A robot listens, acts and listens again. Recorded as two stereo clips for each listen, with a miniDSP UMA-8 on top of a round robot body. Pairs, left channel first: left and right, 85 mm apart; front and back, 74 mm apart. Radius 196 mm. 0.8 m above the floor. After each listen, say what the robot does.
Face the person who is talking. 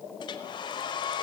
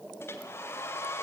Keep listening.
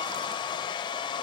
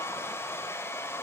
Keep listening.
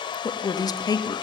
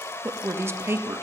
Turn 125° left.
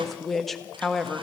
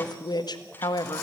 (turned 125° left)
Facing the woman speaking.